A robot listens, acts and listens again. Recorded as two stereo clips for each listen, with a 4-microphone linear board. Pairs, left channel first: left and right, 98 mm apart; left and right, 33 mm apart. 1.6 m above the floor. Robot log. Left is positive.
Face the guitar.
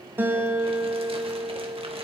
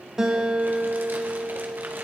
note: The guitar: about 20° right or 160° right.
cmd yaw -20
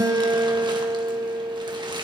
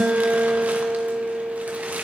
note: So it is at 140° right.
cmd yaw -140
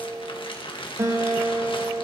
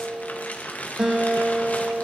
note: The guitar is now 30° right.
cmd yaw -30
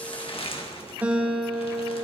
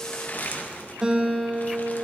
note: The guitar is now 15° right.
cmd yaw -15
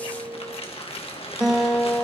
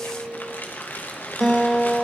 end: Found it: a guitar, straight ahead, 2 to 4 m away.